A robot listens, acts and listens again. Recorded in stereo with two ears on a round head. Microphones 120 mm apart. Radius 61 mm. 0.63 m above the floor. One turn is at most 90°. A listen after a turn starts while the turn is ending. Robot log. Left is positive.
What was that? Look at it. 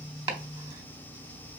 note: The chopping: about 30° right or 150° right.
cmd yaw -30
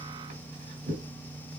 note: So it is at 120° right.
cmd yaw -90
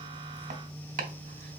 note: The chopping is now 60° right.
cmd yaw -60
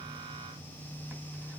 cmd idle
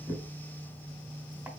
note: The chopping is now 10° right.
cmd yaw -10
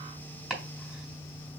end: Found it: chopping, straight ahead.